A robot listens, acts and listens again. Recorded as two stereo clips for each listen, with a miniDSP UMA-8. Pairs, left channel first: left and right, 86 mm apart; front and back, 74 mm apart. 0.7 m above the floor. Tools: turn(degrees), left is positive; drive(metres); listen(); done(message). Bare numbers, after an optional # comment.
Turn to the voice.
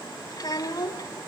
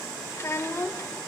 # The child speaking: 60° left.
turn(60)
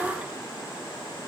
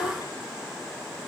listen()
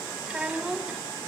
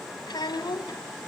done("Facing the child speaking, 1 to 2 m away.")